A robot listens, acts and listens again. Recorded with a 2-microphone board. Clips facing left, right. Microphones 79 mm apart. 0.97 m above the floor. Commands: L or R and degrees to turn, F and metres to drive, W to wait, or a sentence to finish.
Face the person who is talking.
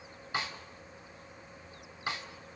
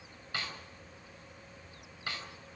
W
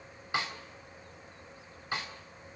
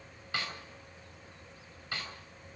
W
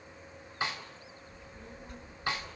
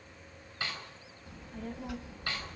R90
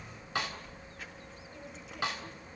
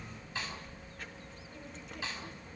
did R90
Facing the child speaking, 1 to 2 m away.